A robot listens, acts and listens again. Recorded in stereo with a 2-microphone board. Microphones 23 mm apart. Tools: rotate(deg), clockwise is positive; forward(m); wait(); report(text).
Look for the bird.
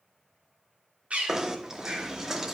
rotate(65)
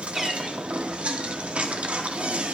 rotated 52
wait()
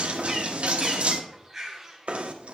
rotate(15)
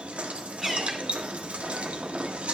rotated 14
report("Facing the bird.")